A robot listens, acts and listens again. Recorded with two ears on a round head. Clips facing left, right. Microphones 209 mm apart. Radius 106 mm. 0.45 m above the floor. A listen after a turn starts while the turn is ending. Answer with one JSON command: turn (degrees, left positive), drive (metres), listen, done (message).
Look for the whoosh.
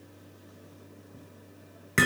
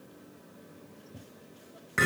{"listen": true}
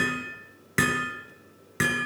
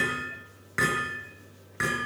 {"listen": true}
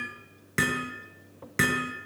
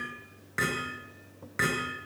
{"done": "I can't make out a whoosh to turn to."}